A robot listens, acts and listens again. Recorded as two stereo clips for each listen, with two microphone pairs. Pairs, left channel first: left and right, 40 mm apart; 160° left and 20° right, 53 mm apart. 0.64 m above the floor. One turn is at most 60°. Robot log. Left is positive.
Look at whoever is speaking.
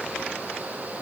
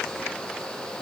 cmd idle
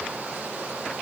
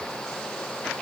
cmd idle
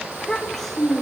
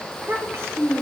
note: The child speaking: 10° left.
cmd yaw +10
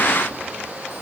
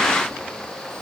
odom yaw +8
cmd idle
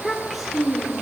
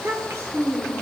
end: Facing the child speaking.